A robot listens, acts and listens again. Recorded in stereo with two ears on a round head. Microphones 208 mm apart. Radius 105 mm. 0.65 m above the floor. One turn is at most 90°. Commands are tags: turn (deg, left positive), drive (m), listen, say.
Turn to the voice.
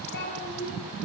<turn deg="45"/>
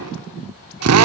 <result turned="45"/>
<listen/>
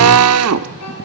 <listen/>
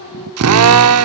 <turn deg="80"/>
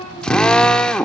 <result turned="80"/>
<turn deg="20"/>
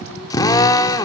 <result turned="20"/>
<listen/>
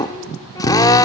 <listen/>
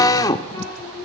<turn deg="15"/>
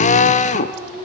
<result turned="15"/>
<say>Found it: a child speaking, straight ahead.</say>